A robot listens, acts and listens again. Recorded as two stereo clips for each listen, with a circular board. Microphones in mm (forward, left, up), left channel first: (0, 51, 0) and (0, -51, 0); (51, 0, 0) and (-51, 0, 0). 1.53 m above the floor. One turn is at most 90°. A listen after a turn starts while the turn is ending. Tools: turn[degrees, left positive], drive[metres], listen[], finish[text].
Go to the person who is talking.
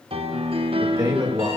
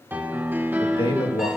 Thought: The man speaking: 35° right.
Action: turn[-35]
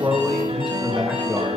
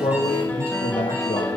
Action: drive[1.0]
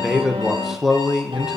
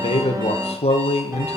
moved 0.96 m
Action: drive[1.0]
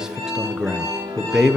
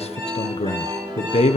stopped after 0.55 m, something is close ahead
Action: finish[Arrived at the man speaking, straight ahead.]